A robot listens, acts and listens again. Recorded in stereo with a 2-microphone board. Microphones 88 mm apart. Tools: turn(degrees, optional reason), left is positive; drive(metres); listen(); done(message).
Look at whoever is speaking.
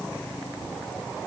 listen()
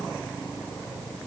listen()
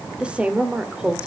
turn(degrees=-30)
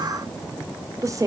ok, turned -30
turn(degrees=-140, reason="So it is at 140° right.")
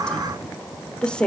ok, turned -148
turn(degrees=10, reason="The woman speaking is now 10° left.")
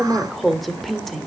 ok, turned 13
done("Facing the woman speaking.")